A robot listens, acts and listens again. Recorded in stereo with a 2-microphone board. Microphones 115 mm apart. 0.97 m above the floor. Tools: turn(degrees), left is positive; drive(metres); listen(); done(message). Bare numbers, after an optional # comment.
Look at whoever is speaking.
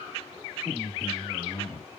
# The man speaking: about 25° right or 155° right.
turn(-25)
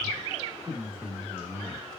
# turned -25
# So it is at 130° right.
turn(-130)
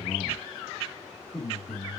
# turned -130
done("Facing the man speaking.")